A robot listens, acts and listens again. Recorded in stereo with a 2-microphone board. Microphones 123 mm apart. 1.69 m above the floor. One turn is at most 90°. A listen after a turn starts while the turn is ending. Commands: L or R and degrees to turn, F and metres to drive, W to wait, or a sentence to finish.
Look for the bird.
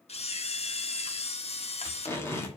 W
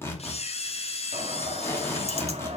R60
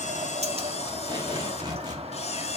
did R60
R60
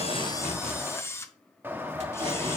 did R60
R20
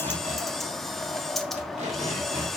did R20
Found it: a bird, straight ahead.